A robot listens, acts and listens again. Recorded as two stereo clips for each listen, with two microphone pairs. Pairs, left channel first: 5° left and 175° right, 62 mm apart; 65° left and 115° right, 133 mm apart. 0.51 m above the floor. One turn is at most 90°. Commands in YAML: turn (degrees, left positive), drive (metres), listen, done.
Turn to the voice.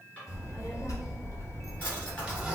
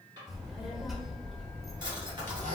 turn: -25
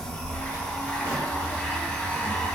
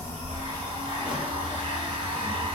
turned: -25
done: "Facing the child speaking."